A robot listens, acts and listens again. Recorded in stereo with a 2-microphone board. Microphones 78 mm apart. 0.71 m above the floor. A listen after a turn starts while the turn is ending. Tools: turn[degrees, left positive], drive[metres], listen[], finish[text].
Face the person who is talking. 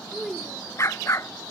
Action: turn[30]
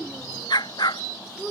Action: turn[30]
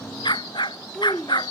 Action: turn[30]
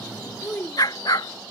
Thought: So it is at 155° left.
Action: turn[155]
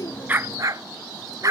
Action: listen[]
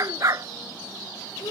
Thought: The child speaking is now 65° left.
Action: turn[65]
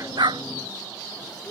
Thought: The child speaking is now 15° left.
Action: turn[15]
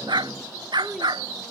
Action: finish[Facing the child speaking.]